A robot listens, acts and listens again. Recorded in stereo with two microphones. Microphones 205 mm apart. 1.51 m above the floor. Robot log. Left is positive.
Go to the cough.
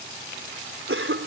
cmd yaw -90
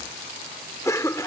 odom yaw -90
note: So it is at 15° left.
cmd yaw +15
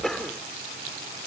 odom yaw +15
cmd fwd 1.0
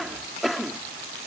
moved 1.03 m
cmd fwd 1.0
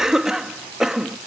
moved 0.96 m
cmd fwd 1.0
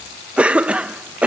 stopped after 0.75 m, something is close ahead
end: I am next to the cough.